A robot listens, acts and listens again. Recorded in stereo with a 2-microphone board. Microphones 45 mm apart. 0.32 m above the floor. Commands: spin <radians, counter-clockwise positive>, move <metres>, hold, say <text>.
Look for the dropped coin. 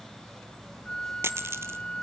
spin -1.31
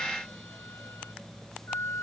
hold
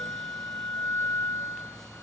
say I heard a dropped coin, but can't make it out now. It was about straight ahead or 30° right.